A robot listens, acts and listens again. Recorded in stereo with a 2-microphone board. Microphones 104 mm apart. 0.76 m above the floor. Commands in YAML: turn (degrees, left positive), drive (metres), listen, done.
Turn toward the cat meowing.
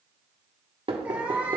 turn: -30
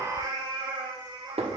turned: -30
turn: -130
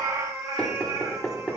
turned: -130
turn: -30
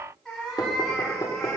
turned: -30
done: "Found it: a cat meowing, straight ahead, 2 to 4 m away."